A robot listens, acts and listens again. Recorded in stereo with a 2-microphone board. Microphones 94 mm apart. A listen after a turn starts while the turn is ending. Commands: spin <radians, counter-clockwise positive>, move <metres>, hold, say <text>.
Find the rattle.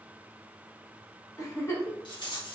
spin 0.87
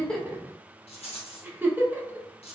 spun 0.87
spin 1.40
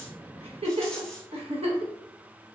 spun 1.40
hold
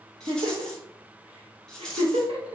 say Facing the rattle.